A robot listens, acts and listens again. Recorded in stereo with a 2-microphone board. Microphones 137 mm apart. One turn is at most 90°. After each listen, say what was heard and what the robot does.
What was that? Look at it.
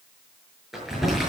Turn 30° right.
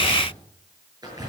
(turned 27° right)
So it is at 150° right. Turn 90° right.
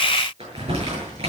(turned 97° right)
The crumpling is now 50° right. Turn 50° right.
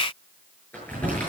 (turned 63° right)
The crumpling is now 15° left. Turn 15° left.
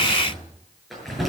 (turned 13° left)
Found it: crumpling, straight ahead.